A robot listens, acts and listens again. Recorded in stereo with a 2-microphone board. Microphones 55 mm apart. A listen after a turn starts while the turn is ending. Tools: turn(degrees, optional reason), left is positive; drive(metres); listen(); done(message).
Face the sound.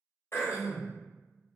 turn(degrees=50, reason="The throat clearing: about 50° left or 130° left.")
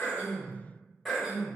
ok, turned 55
done("Facing the throat clearing, 1 to 2 m away.")